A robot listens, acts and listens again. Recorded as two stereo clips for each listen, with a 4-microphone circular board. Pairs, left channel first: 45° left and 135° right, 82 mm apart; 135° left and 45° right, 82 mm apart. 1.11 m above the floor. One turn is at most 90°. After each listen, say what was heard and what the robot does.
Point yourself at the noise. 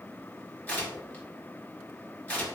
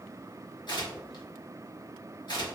The tearing paper: 115° left. Turn 90° left.
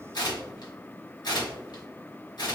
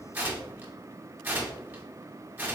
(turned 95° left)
The tearing paper is now 25° left. Turn 25° left.
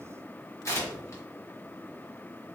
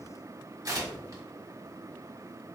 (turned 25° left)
Facing the tearing paper.